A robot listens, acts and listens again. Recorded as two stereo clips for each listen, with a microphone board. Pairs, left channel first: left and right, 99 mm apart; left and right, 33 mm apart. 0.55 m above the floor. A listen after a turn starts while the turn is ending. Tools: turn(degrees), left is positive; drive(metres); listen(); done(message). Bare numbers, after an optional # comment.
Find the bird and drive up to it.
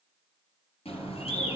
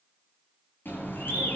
# The bird: about 70° left or 110° left.
turn(70)
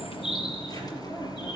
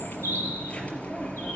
# So it is at 40° left.
turn(40)
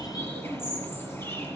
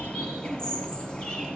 # The bird is now 25° left.
turn(25)
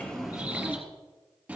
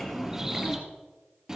# The bird is now 15° right.
turn(-15)
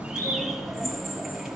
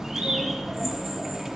drive(1.0)
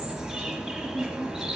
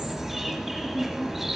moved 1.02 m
drive(1.0)
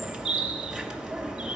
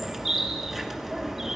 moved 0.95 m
drive(1.0)
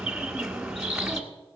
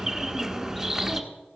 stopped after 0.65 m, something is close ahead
# The bird is now 10° right.
turn(-10)
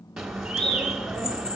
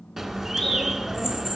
done("I am next to the bird.")